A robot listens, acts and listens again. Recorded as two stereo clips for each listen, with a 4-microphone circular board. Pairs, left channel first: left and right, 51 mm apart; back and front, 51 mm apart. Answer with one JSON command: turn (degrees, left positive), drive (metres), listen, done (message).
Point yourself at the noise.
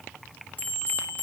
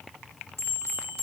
{"turn": 30}
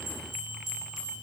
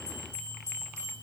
{"turn": -10}
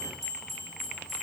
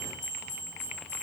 {"done": "Facing the bell."}